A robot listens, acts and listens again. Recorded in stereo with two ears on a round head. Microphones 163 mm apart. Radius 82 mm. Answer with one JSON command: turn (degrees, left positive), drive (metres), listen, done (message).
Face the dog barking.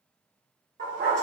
{"turn": -50}
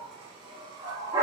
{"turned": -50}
{"turn": -15}
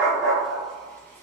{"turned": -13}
{"done": "Found it: a dog barking, straight ahead, 1 to 2 m away."}